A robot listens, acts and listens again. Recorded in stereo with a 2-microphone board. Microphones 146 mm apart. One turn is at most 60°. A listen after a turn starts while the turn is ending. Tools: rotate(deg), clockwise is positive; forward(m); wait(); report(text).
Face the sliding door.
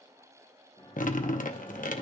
rotate(-40)
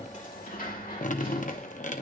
rotate(-60)
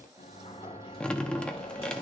rotate(-40)
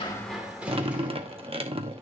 rotate(10)
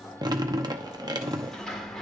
report("Facing the sliding door, 1 to 2 m away.")